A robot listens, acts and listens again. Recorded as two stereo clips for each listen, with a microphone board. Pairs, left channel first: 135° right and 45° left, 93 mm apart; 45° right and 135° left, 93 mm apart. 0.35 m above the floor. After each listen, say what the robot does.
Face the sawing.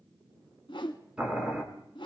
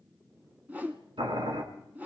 Keep listening.
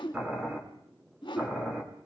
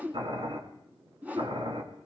Keep listening.
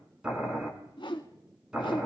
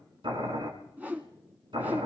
I can't make out sawing to turn to.